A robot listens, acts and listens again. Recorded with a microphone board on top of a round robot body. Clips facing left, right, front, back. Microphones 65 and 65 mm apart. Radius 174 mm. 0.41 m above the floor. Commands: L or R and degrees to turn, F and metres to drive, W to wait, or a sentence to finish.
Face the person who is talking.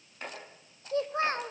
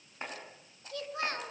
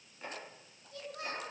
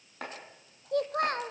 L150
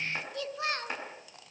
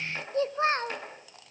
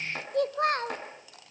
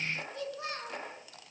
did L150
R35
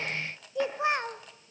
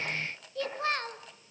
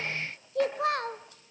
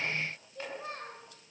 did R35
L15
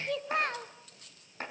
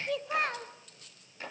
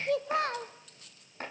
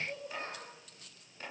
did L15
Found it: a child speaking, straight ahead, 1 to 2 m away.